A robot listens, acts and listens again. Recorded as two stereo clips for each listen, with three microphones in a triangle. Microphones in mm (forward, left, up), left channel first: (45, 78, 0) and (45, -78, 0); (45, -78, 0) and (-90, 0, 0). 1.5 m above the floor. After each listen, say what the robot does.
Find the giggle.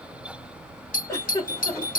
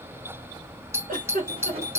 Turn 160° left.
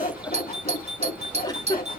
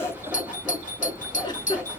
Turn 30° left.
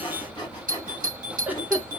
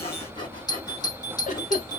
Turn 10° right.
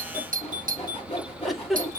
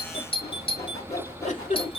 Found it: a giggle, straight ahead.